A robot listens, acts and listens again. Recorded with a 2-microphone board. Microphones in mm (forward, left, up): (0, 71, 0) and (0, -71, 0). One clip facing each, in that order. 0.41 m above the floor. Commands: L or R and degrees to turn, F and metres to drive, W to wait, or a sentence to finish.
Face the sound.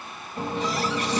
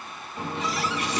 L35
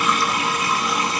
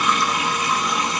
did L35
Found it: a running tap, straight ahead.